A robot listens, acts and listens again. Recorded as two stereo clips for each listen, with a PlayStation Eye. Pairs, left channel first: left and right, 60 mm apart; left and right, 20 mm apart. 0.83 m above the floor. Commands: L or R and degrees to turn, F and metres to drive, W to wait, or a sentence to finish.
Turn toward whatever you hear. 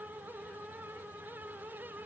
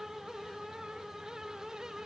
W
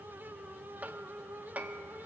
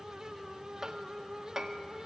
R25
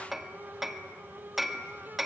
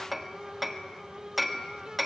Found it: hammering, straight ahead, 1 to 2 m away.